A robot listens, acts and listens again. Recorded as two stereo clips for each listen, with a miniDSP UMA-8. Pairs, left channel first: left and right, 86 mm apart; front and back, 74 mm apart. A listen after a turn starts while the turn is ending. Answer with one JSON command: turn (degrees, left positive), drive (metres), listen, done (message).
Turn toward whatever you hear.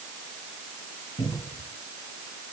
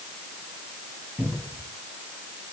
{"turn": 100}
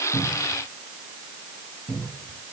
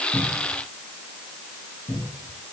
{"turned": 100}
{"done": "Facing the cupboard door."}